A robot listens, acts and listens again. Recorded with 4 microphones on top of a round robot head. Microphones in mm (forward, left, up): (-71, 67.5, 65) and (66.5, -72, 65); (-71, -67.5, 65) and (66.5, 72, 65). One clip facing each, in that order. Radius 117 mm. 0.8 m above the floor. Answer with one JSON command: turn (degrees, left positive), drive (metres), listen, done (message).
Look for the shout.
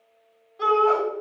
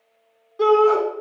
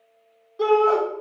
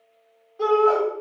{"turn": -85}
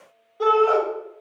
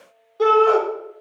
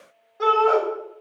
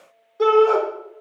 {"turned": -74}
{"turn": -10}
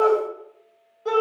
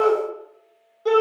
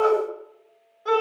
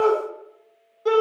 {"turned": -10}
{"done": "Facing the shout."}